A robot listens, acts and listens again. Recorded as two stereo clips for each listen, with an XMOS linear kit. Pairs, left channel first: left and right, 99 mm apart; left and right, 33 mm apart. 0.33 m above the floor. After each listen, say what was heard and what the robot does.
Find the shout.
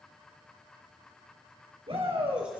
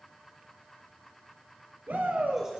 The shout: about 70° right or 110° right. Turn 70° right.
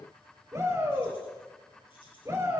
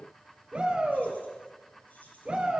So it is at 35° right. Turn 35° right.
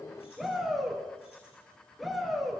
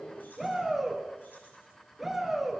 Found it: a shout, straight ahead, over 4 m away.